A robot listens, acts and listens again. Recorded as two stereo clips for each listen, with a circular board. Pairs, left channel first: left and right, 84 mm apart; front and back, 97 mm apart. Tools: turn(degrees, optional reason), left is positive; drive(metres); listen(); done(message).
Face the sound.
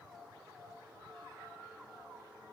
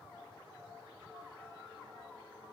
listen()
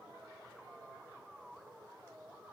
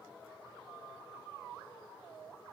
listen()
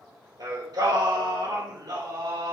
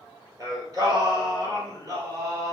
turn(degrees=-125, reason="The singing: 125° right.")
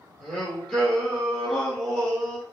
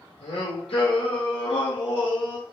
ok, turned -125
done("Facing the singing, over 4 m away.")